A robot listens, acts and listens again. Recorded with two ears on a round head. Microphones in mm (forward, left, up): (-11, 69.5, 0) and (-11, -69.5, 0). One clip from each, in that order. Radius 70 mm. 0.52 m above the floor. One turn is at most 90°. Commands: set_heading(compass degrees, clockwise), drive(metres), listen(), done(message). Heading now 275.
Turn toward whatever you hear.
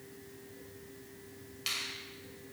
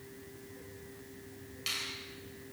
set_heading(245)
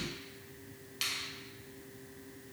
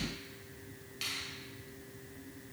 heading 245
set_heading(155)
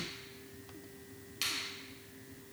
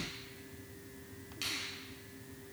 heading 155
set_heading(125)
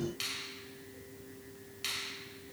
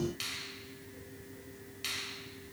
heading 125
done("Facing the finger snap.")